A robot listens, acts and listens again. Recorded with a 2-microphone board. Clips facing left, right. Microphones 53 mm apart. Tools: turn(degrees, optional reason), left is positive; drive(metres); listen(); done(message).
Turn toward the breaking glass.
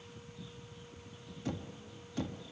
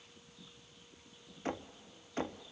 listen()
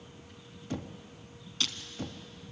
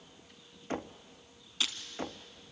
turn(degrees=-30)
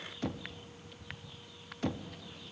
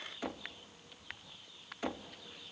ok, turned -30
listen()
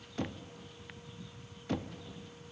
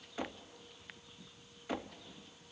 done("I heard breaking glass, but can't make it out now. It was about 20° left or 140° right.")